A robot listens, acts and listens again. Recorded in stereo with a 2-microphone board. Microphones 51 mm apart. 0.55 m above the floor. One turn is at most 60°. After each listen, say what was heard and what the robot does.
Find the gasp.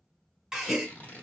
Turn 30° right.
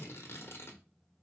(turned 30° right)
Keep listening.
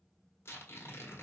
I heard a gasp, but can't make it out now. It was about 20° left or 140° right.